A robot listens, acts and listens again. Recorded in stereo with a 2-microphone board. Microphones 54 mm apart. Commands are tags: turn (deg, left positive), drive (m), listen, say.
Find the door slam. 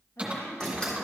<turn deg="30"/>
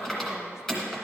<listen/>
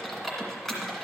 <say>I heard a door slam, but can't make it out now. It was about 15° right or 135° left.</say>